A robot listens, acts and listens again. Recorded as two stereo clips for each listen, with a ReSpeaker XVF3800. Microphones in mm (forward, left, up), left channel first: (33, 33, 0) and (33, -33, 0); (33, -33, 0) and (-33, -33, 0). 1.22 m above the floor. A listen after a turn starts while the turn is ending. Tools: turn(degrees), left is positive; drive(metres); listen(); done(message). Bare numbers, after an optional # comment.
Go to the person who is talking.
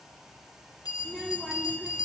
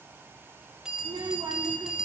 # The child speaking: straight behind.
turn(180)
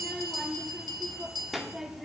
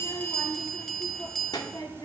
drive(1.0)
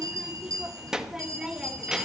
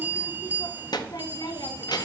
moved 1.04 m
# The child speaking is now 10° right.
turn(-10)
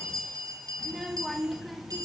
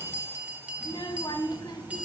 drive(1.0)
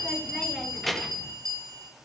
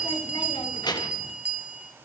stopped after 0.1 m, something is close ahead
done("Arrived at the child speaking, straight ahead.")